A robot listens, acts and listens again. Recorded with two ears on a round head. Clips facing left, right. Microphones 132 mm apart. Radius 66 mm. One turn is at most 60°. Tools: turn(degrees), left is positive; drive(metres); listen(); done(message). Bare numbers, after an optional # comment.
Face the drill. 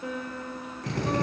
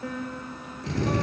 # The drill: about 45° left or 135° left.
turn(45)
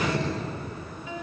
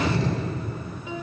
# So it is at 85° left.
turn(60)
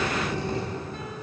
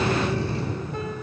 # The drill is now 15° left.
turn(15)
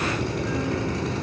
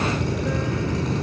done("Found it: a drill, straight ahead, over 4 m away.")